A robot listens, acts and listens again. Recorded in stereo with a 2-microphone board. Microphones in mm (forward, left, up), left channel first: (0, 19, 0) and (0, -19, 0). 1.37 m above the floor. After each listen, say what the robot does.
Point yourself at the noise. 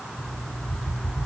Turn 45° left.
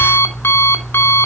Turn 95° left.
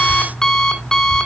Turn 15° left.
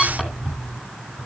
Found it: an alarm clock, straight ahead, 2 to 4 m away.